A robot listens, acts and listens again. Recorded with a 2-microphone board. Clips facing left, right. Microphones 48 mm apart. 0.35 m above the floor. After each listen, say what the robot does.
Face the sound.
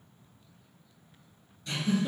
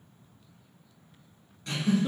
Turn 60° right.
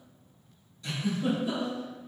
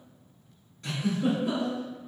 Turn 55° right.
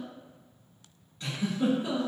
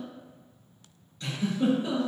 Turn 20° left.
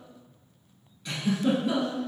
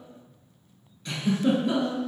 Found it: a giggle, straight ahead, 1 to 2 m away.